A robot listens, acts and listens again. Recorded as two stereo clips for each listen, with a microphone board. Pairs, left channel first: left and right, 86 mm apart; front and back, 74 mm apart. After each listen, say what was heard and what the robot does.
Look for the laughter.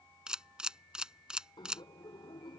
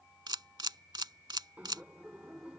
The laughter: 110° left. Turn 110° left.
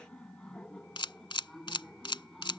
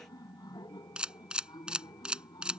Facing the laughter.